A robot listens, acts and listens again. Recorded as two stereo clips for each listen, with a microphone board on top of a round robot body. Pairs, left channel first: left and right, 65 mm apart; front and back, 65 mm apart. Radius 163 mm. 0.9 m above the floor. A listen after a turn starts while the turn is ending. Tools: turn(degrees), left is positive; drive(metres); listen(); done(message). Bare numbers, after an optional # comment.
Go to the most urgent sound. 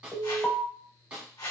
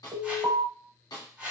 # The alarm: 160° left.
turn(160)
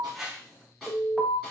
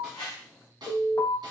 drive(1.0)
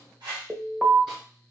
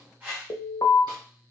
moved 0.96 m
# The alarm is now 10° right.
turn(-10)
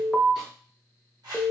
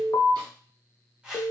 drive(1.0)
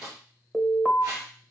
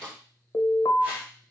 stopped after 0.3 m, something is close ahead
done("Arrived at the alarm, straight ahead.")